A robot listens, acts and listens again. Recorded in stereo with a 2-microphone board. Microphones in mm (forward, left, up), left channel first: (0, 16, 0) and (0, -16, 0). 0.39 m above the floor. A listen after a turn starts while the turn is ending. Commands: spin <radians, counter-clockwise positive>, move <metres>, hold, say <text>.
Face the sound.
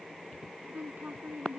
spin -0.96
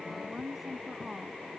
say Facing the woman speaking.